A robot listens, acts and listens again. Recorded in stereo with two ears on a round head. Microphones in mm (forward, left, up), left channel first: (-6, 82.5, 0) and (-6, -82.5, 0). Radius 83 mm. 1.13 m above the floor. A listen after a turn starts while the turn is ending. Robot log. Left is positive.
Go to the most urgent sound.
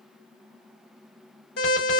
note: The alarm: about 60° left or 120° left.
cmd yaw +60
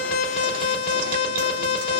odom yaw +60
note: So it is at 60° left.
cmd yaw +60
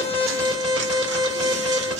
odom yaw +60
cmd fwd 1.0
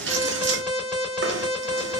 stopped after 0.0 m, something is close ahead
end: Something is in my way. I am facing the alarm but have not reached it.